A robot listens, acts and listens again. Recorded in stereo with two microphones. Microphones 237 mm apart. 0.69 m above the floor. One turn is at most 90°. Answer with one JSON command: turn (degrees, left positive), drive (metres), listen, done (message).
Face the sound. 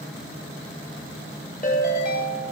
{"turn": 35}
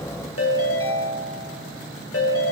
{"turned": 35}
{"turn": 90}
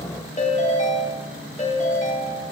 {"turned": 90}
{"turn": 30}
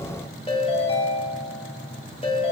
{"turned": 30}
{"turn": 25}
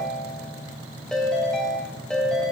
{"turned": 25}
{"done": "Found it: a ringtone, straight ahead."}